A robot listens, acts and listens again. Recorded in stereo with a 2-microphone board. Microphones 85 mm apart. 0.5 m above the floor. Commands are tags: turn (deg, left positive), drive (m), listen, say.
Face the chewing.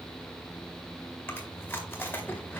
<turn deg="25"/>
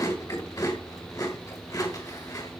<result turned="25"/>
<turn deg="130"/>
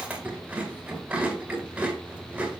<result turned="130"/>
<turn deg="-15"/>
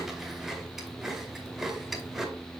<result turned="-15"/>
<say>Facing the chewing.</say>